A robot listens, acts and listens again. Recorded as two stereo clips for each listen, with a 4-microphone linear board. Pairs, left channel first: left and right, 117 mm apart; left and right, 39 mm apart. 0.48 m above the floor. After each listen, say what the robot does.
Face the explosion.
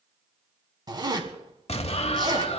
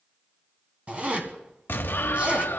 Turn 60° left.
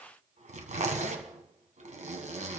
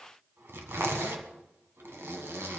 Keep listening.
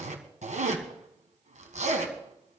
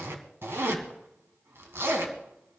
I heard an explosion, but can't make it out now. It was about straight ahead or 60° left.